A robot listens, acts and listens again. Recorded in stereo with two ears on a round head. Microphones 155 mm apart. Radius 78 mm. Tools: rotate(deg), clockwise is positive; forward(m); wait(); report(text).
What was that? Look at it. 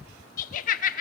rotate(-50)
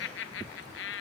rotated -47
rotate(-80)
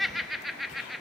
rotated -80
report("Found it: laughter, straight ahead.")